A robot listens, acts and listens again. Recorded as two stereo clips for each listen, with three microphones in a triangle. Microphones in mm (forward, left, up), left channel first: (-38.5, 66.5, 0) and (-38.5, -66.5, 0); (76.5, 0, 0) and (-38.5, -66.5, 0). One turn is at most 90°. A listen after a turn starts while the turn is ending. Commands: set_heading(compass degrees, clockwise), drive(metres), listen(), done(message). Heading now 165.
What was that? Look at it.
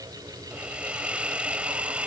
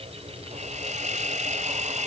set_heading(255)
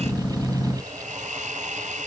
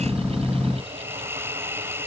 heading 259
set_heading(334)
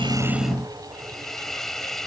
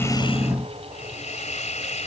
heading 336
done("Facing the hiss.")